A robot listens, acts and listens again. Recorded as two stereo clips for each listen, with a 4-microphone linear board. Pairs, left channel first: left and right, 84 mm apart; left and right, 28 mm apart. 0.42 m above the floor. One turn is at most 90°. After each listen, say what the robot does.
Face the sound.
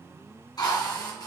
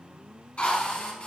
Turn 55° left.
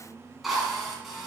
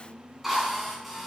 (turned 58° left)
Found it: a drill, straight ahead.